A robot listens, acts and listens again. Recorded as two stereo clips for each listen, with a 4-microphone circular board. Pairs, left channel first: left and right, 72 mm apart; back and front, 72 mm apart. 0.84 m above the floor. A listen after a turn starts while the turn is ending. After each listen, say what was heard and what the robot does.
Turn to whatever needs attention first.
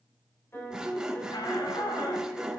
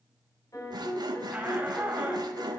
The shout: 75° left. Turn 75° left.
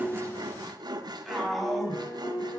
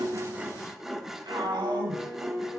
Found it: a shout, straight ahead, over 4 m away.